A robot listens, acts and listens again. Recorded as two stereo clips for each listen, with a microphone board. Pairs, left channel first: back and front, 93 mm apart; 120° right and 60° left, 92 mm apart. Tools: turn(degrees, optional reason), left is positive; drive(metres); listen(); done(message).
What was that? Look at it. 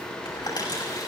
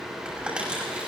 turn(degrees=140, reason="The crumpling: 140° left.")
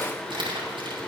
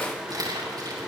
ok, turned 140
turn(degrees=15, reason="The crumpling is now 15° left.")
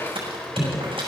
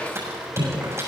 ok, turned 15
done("Facing the crumpling, over 4 m away.")